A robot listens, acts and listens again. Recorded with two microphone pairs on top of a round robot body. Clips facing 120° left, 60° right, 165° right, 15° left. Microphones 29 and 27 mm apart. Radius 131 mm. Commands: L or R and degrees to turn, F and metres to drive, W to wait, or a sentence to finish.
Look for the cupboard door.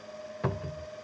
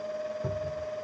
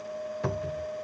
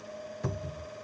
L130
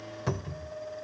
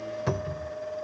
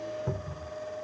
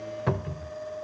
L20
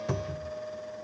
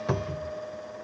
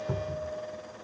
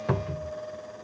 Facing the cupboard door.